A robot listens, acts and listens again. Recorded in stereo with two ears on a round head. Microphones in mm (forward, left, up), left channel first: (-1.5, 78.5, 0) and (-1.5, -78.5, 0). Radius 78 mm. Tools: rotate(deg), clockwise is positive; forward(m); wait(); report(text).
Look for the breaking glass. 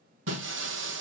rotate(90)
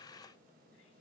report("I heard breaking glass from this way, but can't make it out now.")